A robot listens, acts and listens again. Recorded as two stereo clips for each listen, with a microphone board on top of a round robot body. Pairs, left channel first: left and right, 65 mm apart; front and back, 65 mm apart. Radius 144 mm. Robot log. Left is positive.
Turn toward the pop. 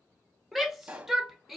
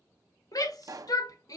note: The pop: 160° right.
cmd yaw -160
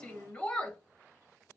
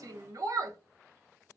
end: I heard a pop from this way, but can't make it out now.